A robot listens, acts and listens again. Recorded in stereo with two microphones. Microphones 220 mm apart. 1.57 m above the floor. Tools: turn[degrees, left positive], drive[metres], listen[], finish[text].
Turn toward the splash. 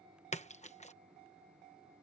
Thought: The splash: about 30° left or 150° left.
Action: turn[30]
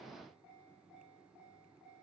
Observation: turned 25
Action: listen[]
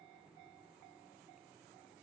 Action: finish[I heard a splash, but can't make it out now. It was about 5° left or 125° left.]